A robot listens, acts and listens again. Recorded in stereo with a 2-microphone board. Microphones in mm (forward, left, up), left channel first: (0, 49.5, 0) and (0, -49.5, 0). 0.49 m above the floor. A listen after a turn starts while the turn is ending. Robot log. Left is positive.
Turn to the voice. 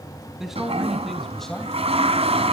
cmd yaw +30
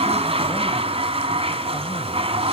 cmd idle
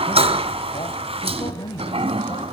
note: So it is at 105° left.
cmd yaw +105
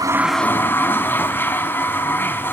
cmd idle
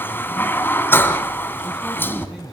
end: Facing the man speaking, 2 to 4 m away.